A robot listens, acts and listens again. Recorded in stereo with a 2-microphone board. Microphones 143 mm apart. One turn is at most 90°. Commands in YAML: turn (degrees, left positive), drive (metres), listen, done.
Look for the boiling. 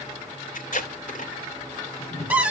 turn: 20
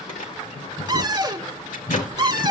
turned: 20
turn: 90
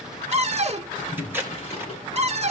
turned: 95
turn: 45
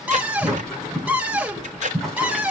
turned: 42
done: "Found it: boiling, straight ahead."